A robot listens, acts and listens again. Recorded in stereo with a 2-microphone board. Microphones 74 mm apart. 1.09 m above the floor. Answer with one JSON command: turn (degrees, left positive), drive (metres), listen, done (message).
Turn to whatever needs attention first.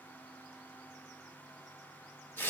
{"listen": true}
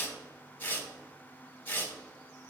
{"listen": true}
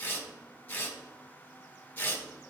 {"done": "I can't make out anything urgent to turn to."}